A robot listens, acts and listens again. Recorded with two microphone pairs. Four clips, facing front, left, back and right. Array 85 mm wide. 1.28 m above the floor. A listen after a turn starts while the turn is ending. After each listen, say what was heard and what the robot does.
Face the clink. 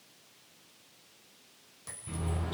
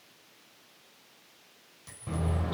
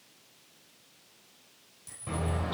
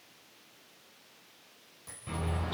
The clink: 10° right. Turn 10° right.
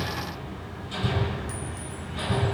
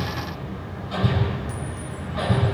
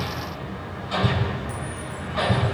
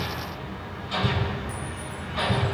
Keep listening.
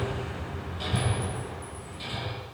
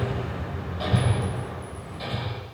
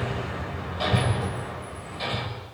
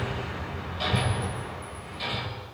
Keep listening.
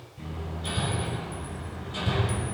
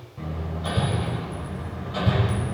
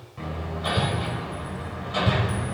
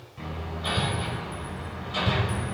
I heard a clink from this way, but can't make it out now.